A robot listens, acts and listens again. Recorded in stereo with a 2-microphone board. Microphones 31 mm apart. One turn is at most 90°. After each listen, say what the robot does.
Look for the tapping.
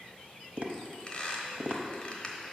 Turn 50° right.
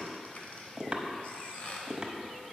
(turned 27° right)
Turn 25° right.
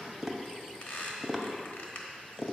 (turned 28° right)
Found it: tapping, straight ahead.